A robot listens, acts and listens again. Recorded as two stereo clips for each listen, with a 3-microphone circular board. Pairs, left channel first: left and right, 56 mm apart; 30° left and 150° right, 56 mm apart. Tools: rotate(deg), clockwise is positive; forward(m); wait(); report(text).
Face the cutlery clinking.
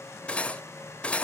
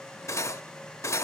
rotate(-25)
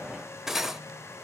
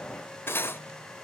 report("Found it: cutlery clinking, straight ahead, under 1 m away.")